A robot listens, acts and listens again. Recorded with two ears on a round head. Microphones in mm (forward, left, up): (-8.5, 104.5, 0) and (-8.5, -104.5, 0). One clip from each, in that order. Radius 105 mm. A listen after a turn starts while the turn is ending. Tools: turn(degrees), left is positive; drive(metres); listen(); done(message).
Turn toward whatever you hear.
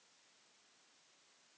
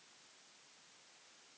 listen()
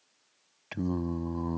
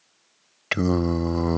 turn(degrees=-60)
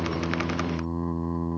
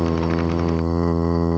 turn(degrees=-60)
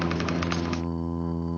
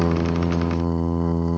turn(degrees=-15)
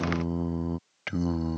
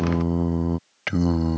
done("Facing the singing.")